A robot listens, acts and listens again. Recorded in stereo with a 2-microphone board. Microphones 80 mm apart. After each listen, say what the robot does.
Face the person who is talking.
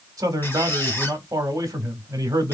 Turn 45° right.
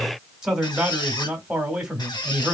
Turn 10° right.
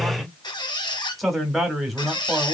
Found it: a man speaking, straight ahead, 1 to 2 m away.